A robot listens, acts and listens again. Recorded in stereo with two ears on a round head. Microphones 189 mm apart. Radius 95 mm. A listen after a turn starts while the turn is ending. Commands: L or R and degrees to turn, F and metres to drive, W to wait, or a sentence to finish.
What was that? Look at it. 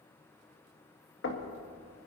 L55
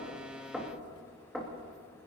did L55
Facing the knocking.